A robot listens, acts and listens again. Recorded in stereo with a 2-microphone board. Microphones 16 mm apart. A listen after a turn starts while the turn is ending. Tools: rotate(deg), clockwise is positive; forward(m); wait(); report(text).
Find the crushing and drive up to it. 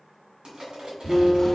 rotate(70)
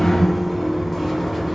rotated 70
wait()
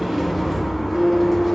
wait()
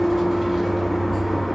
report("I heard crushing, but can't make it out now. It was about straight ahead or 40° right. I did not reach it.")